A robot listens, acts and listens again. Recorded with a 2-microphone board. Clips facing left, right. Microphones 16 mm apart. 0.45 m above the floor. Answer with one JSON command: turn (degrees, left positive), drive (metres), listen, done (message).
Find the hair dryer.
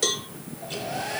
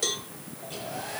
{"turn": 40}
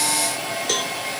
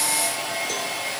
{"done": "Found it: a hair dryer, straight ahead, over 4 m away."}